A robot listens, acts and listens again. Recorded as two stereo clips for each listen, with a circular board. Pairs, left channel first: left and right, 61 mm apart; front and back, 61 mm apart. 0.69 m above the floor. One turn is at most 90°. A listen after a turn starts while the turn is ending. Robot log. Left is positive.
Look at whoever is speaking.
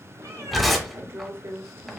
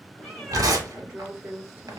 note: The woman speaking: 120° right.
cmd yaw -90
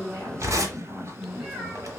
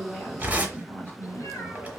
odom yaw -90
note: The woman speaking is now 55° right.
cmd yaw -55
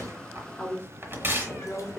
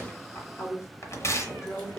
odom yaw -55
note: The woman speaking is now 20° left.
cmd yaw +20
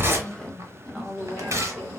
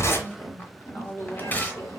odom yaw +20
end: Found it: a woman speaking, straight ahead, 1 to 2 m away.